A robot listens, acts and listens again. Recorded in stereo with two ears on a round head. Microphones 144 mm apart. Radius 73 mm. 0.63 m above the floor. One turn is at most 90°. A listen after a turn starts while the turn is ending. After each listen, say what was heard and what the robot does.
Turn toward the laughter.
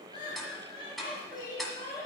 The laughter: about 25° left or 155° left. Turn 25° left.
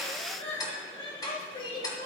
The laughter: about 30° left or 150° left. Turn 30° left.
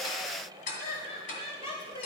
So it is at 140° left. Turn 90° left.
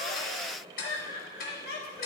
The laughter is now 80° left. Turn 80° left.
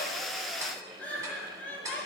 The laughter is now 10° left. Turn 10° left.
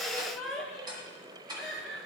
Facing the laughter.